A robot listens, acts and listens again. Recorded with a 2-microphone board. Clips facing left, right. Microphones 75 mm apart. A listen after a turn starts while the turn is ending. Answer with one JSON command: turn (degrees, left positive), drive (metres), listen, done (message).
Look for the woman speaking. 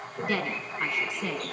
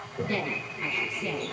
{"turn": 90}
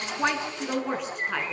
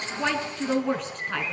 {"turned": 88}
{"done": "Found it: a woman speaking, straight ahead."}